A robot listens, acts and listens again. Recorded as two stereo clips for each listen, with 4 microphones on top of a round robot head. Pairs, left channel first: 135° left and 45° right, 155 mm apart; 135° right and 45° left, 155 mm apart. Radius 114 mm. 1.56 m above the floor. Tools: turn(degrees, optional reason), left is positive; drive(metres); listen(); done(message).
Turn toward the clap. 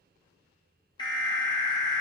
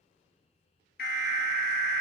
listen()
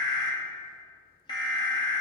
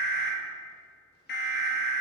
listen()
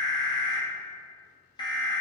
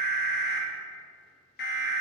done("I can't make out a clap, only an alarm.")